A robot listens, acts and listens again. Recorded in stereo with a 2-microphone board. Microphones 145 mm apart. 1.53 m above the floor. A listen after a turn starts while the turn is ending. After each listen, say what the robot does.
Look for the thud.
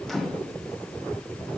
Keep listening.
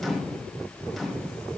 Keep listening.
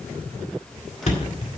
Turn 55° left.
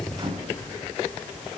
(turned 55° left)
Keep listening.
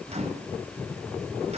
I heard a thud, but can't make it out now. It was about straight ahead or 70° left.